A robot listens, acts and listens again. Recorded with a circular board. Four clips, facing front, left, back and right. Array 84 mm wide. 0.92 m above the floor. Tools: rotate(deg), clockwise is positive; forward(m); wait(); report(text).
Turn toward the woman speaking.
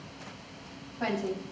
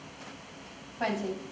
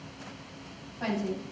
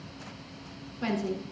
rotate(-80)
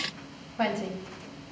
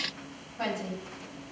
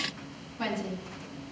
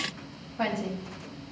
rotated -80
rotate(20)
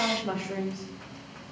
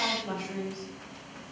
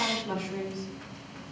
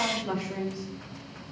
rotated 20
rotate(10)
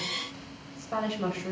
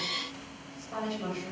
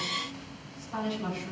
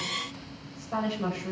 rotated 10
rotate(15)
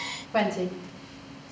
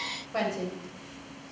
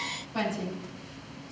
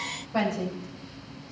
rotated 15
report("Found it: a woman speaking, straight ahead.")